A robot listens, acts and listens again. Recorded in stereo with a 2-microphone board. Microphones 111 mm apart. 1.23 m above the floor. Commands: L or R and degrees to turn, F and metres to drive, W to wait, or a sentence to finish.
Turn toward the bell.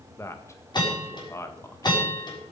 L40
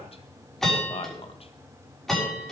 Found it: a bell, straight ahead.